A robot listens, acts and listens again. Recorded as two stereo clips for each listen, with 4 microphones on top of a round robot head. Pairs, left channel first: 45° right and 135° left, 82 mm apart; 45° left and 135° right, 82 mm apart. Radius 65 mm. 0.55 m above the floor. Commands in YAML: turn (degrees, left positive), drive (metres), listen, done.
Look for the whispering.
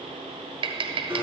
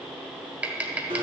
listen: true
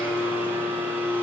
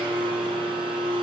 listen: true
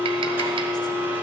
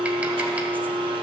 done: "I can't make out whispering, only tapping and a blender."